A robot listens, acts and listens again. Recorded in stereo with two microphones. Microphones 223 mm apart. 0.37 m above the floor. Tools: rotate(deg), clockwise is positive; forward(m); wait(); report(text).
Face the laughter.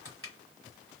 wait()
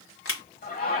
rotate(-40)
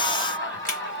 rotate(-90)
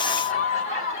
rotate(-40)
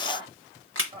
rotate(25)
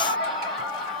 report("Found it: laughter, straight ahead.")